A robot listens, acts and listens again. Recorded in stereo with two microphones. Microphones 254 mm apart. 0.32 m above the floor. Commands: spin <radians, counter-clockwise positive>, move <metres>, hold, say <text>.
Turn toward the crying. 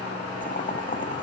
hold
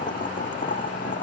hold
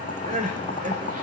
spin -0.52
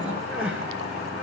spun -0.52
say Found it: crying, straight ahead.